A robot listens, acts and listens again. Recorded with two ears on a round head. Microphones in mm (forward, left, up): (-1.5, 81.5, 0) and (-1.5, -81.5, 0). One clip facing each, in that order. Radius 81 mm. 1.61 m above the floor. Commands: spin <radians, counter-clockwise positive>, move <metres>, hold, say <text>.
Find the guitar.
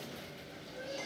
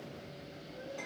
hold
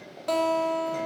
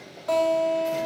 spin 0.87
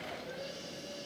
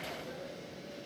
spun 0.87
hold
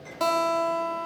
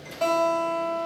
spin 1.31
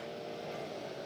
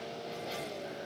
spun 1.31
hold
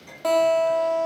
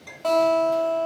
spin 0.26
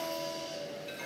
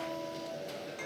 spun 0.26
hold
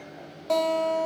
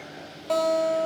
say Facing the guitar.